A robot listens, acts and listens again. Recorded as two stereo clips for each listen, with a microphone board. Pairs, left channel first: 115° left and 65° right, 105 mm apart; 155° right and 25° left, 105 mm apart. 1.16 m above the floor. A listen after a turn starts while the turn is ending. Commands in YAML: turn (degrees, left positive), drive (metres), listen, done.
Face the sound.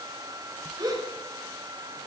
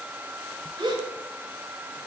turn: -20
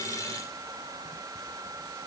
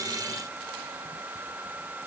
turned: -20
done: "Facing where the gasp came from. I can't hear it now."